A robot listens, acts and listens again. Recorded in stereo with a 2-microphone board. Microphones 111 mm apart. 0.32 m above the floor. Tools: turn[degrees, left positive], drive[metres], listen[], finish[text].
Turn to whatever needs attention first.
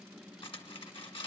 Action: listen[]
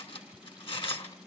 Action: listen[]
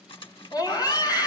Thought: The scream: about 40° left or 140° left.
Action: turn[40]
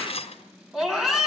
Action: finish[Found it: a scream, straight ahead, 2 to 4 m away.]